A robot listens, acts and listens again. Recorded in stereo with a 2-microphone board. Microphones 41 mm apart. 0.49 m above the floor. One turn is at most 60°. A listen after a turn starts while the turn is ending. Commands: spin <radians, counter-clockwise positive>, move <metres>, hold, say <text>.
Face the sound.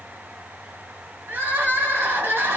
spin -1.05
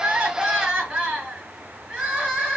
spin -0.52
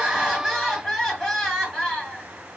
say Facing the crying, 1 to 2 m away.